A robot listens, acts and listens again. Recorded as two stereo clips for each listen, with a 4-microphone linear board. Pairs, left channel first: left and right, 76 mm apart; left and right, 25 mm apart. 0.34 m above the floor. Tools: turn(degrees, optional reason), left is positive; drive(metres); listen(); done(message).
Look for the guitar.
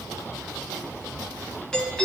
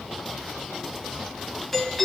listen()
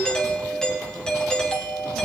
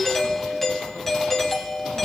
listen()
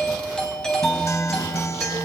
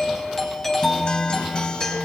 turn(degrees=40, reason="The guitar: about 40° left or 140° left.")
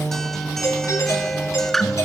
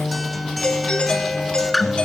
done("Facing the guitar, 1 to 2 m away.")